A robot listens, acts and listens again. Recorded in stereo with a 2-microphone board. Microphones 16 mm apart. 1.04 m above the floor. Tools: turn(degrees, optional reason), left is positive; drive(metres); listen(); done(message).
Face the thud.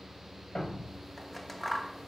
turn(degrees=70, reason="The thud: about 70° left or 110° left.")
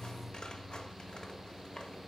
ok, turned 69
listen()
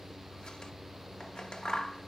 done("I heard a thud, but can't make it out now. It was about straight ahead or 40° left.")